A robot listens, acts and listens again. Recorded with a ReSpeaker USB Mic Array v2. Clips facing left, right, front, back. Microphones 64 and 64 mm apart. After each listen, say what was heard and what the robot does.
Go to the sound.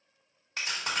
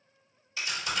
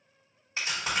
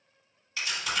The chewing: 55° left. Turn 55° left.
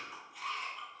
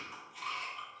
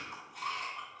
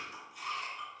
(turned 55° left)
Drive 1.0 m forward.
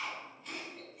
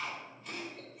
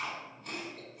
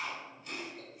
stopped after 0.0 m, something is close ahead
Something is in my way. I am facing the chewing but have not reached it.